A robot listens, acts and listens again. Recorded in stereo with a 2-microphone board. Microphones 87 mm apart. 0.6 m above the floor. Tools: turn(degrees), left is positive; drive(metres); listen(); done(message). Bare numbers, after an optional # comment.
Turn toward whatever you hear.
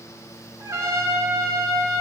# The trumpet: about 35° right or 145° right.
turn(-35)
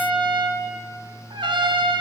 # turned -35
# So it is at 115° right.
turn(-115)
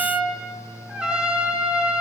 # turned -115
# The trumpet is now 10° right.
turn(-10)
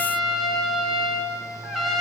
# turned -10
done("Facing the trumpet, 1 to 2 m away.")